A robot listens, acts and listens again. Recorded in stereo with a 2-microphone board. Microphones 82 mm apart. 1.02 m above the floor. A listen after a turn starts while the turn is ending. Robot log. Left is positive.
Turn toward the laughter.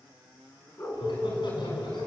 note: The laughter: about 70° left or 110° left.
cmd yaw +70
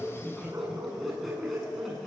end: Found it: laughter, straight ahead, over 4 m away.